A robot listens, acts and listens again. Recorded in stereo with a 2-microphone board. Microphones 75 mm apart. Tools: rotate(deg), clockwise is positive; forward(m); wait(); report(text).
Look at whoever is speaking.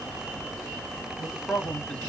rotate(-15)
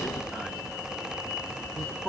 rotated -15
report("Facing the man speaking, 1 to 2 m away.")